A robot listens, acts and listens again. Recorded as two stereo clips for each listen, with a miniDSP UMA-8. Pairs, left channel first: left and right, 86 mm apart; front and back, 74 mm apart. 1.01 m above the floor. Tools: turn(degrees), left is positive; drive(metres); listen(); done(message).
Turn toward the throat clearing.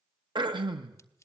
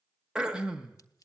turn(degrees=-100)
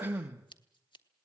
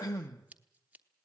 turn(degrees=-25)
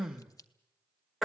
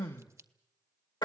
done("Found it: throat clearing, straight ahead, 1 to 2 m away.")